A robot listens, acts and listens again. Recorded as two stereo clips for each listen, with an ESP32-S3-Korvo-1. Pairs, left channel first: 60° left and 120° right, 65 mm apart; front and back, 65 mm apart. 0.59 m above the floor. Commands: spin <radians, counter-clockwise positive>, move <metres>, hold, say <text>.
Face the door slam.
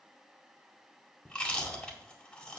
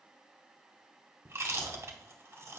hold
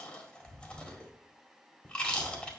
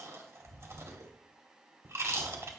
hold
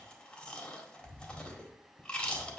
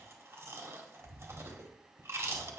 say I can't make out a door slam to turn to.